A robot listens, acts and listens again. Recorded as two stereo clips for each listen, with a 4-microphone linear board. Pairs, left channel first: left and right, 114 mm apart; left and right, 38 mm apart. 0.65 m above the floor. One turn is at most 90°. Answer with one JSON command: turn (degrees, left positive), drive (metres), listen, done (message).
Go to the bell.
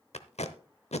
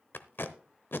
{"listen": true}
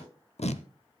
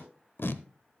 {"listen": true}
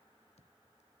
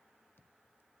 {"done": "I can't make out a bell to turn to."}